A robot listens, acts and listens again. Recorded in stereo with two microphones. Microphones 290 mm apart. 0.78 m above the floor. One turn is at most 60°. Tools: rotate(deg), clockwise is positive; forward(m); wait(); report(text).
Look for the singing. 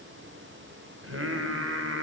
rotate(50)
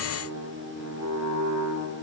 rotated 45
rotate(60)
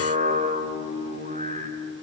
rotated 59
rotate(25)
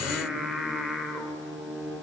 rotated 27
report("Found it: singing, straight ahead.")